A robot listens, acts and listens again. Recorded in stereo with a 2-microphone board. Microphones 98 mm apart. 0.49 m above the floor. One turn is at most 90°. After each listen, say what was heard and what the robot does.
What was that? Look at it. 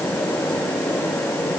Keep listening.
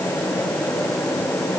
Keep listening.
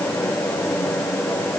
I can't make out anything.